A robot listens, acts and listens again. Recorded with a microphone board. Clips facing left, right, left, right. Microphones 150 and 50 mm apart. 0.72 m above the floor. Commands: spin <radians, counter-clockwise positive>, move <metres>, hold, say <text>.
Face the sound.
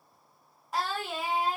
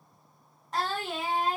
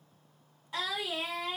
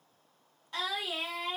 spin 0.52
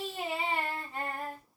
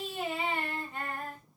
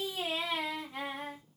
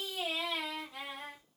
spin 2.44
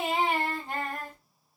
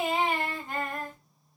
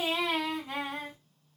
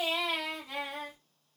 spin 0.70
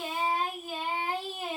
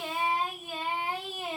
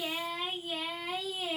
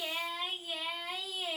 say Found it: singing, straight ahead, 1 to 2 m away.